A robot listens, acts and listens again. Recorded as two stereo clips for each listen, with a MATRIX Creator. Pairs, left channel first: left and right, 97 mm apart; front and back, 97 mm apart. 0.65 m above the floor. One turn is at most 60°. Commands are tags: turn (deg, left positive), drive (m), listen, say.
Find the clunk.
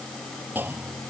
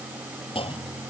<turn deg="-20"/>
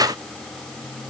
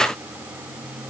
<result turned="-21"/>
<say>I heard a clunk from this way, but can't make it out now.</say>